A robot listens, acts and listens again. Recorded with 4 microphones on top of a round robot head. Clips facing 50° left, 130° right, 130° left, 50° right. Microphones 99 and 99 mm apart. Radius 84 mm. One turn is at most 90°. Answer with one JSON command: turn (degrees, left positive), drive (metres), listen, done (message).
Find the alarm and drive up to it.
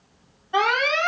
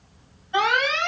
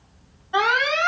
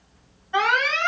{"turn": 60}
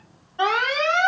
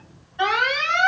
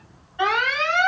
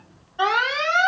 {"drive": 1.0}
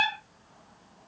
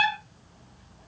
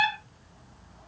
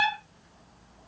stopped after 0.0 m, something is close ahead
{"done": "Blocked. The alarm is further on, straight ahead."}